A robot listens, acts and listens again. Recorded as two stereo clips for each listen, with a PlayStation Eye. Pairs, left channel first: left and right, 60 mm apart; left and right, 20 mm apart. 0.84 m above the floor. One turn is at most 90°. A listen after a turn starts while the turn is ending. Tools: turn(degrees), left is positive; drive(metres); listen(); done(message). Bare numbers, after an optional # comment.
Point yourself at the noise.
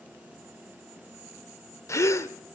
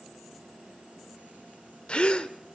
# The gasp: about 55° left or 125° left.
turn(55)
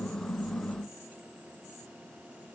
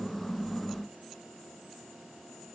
listen()
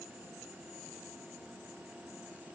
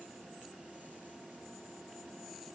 done("I heard a gasp, but can't make it out now. It was about straight ahead or 70° left.")